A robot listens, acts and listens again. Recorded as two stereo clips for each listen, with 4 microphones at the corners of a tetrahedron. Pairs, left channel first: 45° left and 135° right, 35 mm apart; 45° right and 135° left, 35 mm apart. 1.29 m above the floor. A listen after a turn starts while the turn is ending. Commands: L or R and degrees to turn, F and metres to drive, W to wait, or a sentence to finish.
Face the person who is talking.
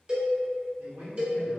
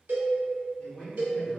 R115
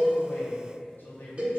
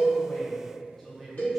L40
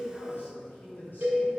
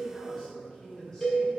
L30
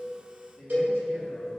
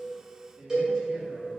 L15
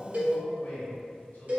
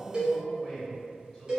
L15
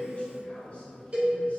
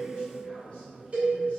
Facing the man speaking, 1 to 2 m away.